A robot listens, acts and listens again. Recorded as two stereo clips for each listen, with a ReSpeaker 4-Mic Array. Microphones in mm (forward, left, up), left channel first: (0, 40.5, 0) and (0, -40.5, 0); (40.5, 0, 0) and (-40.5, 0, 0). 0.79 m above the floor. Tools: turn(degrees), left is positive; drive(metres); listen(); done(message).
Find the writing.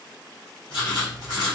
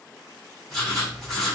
turn(degrees=85)
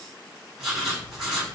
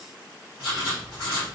done("Found it: writing, straight ahead, 1 to 2 m away.")